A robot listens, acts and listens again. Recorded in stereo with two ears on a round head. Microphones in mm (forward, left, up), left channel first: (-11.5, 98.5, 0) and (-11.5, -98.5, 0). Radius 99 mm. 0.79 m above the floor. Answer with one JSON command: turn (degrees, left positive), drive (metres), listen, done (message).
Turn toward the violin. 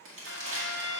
{"turn": -50}
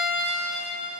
{"done": "Facing the violin, 1 to 2 m away."}